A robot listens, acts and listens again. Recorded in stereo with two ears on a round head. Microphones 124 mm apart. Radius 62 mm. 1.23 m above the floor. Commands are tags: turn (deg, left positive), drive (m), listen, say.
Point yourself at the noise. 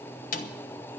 <turn deg="65"/>
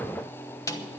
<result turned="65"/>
<turn deg="25"/>
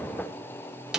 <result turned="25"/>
<say>Found it: a snare drum, straight ahead, 1 to 2 m away.</say>